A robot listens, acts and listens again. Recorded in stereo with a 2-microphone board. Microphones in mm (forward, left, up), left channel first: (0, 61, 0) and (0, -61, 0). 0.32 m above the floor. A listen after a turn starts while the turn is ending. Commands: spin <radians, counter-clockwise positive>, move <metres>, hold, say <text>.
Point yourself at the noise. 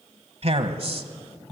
spin -0.87
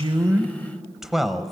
say Facing the man speaking, 1 to 2 m away.